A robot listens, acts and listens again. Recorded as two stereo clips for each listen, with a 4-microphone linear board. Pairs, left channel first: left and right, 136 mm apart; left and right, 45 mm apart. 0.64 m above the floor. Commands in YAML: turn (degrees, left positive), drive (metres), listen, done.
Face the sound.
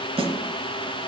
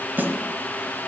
turn: -45
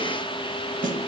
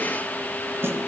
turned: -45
turn: -90
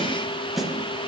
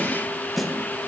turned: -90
done: "Found it: a snare drum, straight ahead."